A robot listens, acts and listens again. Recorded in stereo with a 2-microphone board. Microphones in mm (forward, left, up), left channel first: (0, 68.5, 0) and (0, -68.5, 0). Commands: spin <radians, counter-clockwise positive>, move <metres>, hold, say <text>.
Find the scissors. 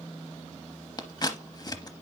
spin 0.52
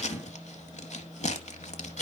spin 2.09
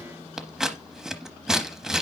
say Found it: scissors, straight ahead.